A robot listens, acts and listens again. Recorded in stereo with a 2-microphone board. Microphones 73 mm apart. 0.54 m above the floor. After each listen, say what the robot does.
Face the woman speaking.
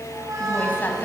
Turn 30° left.
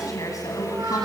Turn 125° left.
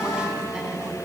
Keep listening.
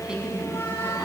Turn 15° right.
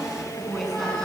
Found it: a woman speaking, straight ahead, over 4 m away.